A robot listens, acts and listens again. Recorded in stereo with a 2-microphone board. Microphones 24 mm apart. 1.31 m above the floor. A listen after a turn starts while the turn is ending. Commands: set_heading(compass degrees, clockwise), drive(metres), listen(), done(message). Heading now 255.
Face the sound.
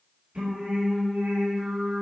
set_heading(320)
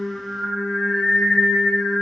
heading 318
set_heading(13)
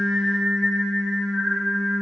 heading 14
set_heading(59)
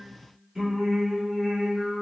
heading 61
set_heading(81)
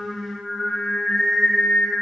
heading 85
done("Facing the singing.")